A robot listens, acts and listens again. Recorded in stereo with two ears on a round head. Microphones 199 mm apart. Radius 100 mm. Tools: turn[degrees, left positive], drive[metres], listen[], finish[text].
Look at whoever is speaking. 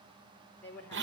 Action: turn[30]
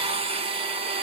Action: listen[]
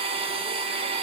Action: listen[]
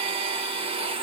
Action: finish[I heard a woman speaking, but can't make it out now. It was about 20° right or 140° left.]